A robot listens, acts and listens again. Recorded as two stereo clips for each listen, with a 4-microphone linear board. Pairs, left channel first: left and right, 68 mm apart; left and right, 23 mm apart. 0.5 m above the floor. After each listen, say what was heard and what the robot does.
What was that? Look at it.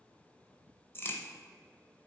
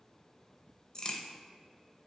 The crack: about 35° left or 145° left. Turn 35° left.
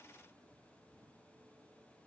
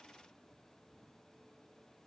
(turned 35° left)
Keep listening.
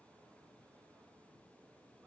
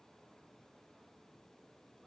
I heard a crack, but can't make it out now. It was about straight ahead or 110° left.